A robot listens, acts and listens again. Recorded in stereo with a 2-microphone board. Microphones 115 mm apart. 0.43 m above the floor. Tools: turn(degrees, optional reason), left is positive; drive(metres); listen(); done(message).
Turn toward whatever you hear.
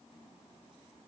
listen()
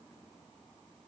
listen()
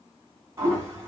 turn(degrees=-25, reason="The toilet flushing: about 25° right or 155° right.")
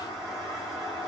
done("Found it: a toilet flushing, straight ahead.")